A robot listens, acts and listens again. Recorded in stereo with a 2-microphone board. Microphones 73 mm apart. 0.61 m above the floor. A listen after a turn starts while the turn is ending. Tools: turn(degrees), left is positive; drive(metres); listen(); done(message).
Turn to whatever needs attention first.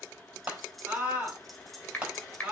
turn(degrees=-15)
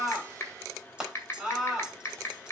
done("Facing the scream.")